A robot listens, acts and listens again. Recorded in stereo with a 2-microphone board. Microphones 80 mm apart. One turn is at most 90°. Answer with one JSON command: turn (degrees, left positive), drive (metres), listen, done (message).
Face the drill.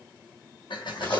{"turn": 90}
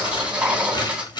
{"turn": -10}
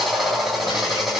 {"done": "Found it: a drill, straight ahead, 2 to 4 m away."}